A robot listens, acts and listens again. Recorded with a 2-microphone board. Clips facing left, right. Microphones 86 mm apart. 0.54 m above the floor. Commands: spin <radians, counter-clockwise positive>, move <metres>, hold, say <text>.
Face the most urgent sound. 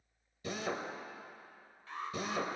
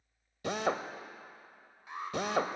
spin -0.26
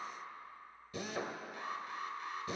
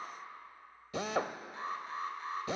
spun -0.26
spin -2.62
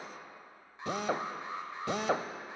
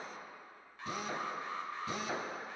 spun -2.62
spin 0.35
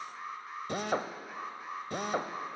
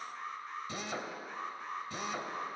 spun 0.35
say Found it: an alarm, straight ahead, 2 to 4 m away.